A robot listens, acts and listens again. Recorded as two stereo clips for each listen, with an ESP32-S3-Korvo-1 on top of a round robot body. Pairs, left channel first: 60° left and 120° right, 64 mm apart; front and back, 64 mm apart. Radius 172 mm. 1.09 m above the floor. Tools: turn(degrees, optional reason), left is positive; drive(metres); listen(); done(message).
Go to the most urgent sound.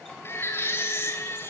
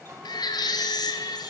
drive(metres=1.0)
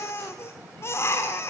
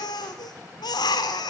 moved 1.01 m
turn(degrees=10, reason="The baby crying is now 10° left.")
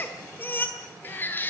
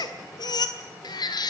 drive(metres=1.0)
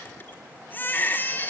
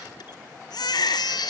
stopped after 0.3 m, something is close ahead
done("Arrived at the baby crying, straight ahead.")